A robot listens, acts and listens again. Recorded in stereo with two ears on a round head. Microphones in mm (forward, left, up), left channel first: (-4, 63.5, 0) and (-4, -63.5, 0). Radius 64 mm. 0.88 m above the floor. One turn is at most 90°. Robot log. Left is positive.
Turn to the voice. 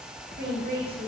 note: The woman speaking: about 70° right or 110° right.
cmd yaw -70
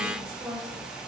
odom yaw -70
note: So it is at 15° right.
cmd yaw -15
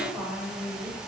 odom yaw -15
end: Facing the woman speaking.